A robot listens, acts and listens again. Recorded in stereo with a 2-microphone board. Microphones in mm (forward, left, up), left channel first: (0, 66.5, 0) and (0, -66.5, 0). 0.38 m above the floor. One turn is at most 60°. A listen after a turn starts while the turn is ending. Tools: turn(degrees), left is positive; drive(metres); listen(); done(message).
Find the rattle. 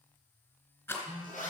turn(degrees=20)
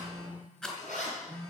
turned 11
done("Found it: a rattle, straight ahead, 2 to 4 m away.")